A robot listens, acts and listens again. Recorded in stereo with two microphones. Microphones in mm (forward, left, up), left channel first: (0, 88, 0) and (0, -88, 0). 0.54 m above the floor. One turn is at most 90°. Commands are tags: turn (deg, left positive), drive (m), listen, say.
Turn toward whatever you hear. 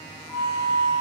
<turn deg="25"/>
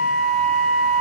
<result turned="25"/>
<say>Found it: a flute, straight ahead.</say>